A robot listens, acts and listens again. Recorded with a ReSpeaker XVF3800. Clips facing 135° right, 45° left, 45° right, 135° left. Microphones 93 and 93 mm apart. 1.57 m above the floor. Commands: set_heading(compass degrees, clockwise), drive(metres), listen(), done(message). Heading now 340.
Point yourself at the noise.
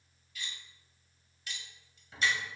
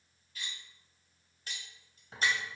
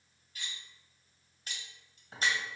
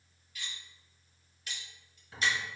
done("Facing the cutlery clinking.")